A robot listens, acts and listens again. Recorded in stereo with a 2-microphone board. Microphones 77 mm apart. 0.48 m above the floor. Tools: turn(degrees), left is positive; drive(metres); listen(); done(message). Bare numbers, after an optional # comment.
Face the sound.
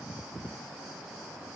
listen()
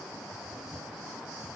listen()
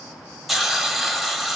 turn(30)
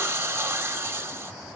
# So it is at 35° right.
turn(-35)
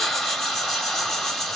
done("Found it: a hiss, straight ahead.")